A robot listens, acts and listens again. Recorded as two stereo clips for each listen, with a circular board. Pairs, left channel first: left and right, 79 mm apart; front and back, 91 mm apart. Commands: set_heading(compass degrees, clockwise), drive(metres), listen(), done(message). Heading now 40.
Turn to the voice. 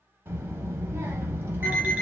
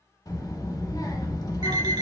set_heading(75)
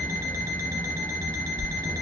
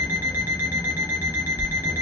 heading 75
done("Found it: a child speaking, straight ahead, under 1 m away.")